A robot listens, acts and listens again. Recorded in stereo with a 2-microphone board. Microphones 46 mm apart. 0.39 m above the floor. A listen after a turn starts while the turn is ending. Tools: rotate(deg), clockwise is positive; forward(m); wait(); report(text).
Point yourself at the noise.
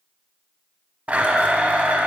rotate(30)
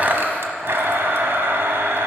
rotate(115)
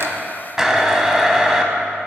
rotate(15)
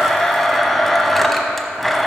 report("Facing the blender, under 1 m away.")